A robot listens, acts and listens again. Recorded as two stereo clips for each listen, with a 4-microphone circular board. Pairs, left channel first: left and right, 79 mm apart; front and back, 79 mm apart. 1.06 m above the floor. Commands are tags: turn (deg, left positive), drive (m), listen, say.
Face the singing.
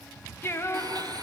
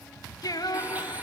<turn deg="35"/>
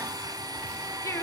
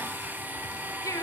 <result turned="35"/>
<turn deg="45"/>
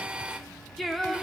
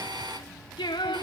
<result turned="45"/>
<say>Found it: singing, straight ahead, 2 to 4 m away.</say>